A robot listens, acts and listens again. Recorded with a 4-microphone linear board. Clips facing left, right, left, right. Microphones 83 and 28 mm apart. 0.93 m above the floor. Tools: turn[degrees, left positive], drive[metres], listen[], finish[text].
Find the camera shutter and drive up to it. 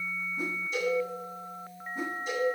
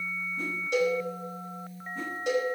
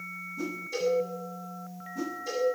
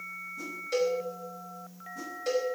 Action: listen[]
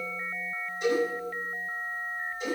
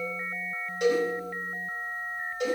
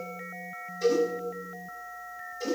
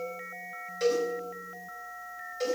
Action: listen[]
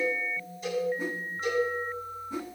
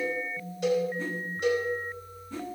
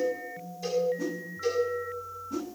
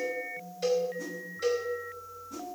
Action: finish[I can't make out a camera shutter to turn to.]